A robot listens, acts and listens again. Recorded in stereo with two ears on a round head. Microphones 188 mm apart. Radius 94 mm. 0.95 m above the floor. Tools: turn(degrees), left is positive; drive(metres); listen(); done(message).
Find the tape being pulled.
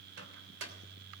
listen()
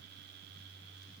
listen()
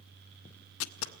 turn(degrees=70)
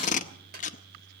turn(degrees=40)
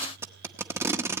turn(degrees=-10)
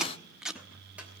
done("Facing the tape being pulled, under 1 m away.")